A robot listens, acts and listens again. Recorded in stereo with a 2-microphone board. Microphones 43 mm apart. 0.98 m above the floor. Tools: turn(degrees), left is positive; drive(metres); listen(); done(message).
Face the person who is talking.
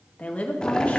turn(degrees=30)
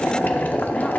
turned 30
listen()
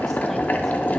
listen()
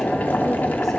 done("I heard a woman speaking, but can't make it out now. It was about straight ahead or 120° left.")